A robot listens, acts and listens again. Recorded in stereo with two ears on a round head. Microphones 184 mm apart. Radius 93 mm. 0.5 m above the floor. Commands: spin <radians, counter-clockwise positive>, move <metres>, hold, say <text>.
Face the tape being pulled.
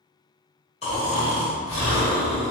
hold
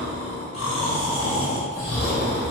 hold
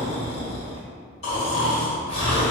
say I can't make out tape being pulled, only snoring.